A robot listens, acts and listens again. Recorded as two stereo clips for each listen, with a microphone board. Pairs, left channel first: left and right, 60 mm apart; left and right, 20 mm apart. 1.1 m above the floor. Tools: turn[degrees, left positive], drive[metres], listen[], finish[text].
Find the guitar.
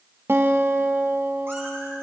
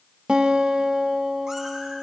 Thought: The guitar: about 45° right or 135° right.
Action: turn[-45]
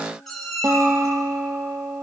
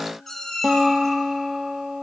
Thought: So it is at 85° right.
Action: turn[-85]
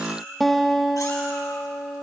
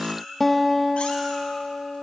Action: finish[Found it: a guitar, straight ahead, 1 to 2 m away.]